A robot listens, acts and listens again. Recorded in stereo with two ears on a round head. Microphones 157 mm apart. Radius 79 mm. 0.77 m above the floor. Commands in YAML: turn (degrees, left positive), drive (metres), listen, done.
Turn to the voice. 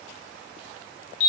listen: true
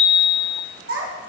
turn: -90
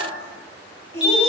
turn: 15
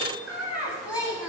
turn: -10
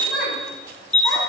done: "Facing the child speaking, 2 to 4 m away."